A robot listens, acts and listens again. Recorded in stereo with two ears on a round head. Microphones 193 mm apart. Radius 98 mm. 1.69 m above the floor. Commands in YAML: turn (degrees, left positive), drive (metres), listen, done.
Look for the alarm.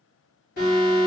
turn: 45
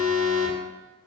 turn: 10
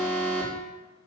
done: "Facing the alarm."